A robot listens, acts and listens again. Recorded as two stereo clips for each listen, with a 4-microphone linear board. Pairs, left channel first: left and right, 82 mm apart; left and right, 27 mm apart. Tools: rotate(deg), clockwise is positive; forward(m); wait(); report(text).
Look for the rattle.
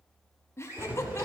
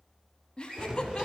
rotate(20)
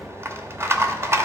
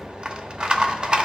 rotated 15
rotate(150)
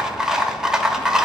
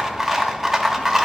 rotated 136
report("Found it: a rattle, straight ahead, under 1 m away.")